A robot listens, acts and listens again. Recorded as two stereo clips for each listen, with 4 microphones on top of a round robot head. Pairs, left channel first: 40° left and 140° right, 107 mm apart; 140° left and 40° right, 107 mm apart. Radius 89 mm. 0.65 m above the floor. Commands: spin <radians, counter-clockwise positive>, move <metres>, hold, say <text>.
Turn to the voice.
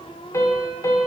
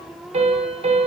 hold
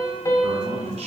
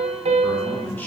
spin -2.62
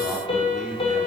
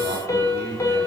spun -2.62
spin -0.87
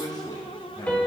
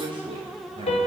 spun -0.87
spin -0.17
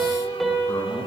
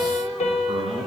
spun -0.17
say Found it: a man speaking, straight ahead.